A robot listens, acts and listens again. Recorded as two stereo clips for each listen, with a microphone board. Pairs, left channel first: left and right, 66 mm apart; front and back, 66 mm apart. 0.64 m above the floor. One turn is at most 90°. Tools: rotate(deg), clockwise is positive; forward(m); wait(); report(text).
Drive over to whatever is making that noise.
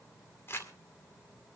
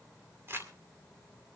rotate(-90)
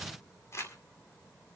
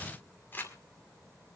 rotate(-50)
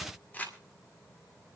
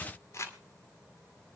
rotate(-30)
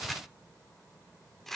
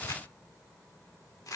forward(1.0)
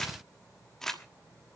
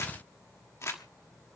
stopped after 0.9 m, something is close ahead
rotate(-10)
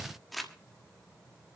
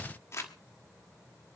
report("Arrived at the crumpling, straight ahead.")